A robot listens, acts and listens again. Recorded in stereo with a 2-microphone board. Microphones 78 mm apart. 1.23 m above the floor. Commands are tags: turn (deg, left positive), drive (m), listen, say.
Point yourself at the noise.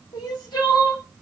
<turn deg="70"/>
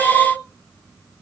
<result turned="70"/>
<turn deg="40"/>
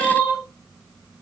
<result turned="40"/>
<say>Facing the crying, 1 to 2 m away.</say>